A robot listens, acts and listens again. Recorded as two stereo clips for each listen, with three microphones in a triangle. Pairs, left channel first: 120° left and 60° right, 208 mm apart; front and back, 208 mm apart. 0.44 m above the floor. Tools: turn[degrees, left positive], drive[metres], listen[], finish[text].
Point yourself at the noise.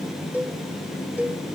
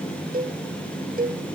Thought: The cowbell: 140° right.
Action: turn[-140]
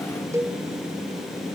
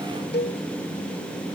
Thought: The cowbell is now 15° left.
Action: turn[15]
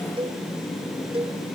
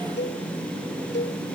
Action: finish[Facing the cowbell, 1 to 2 m away.]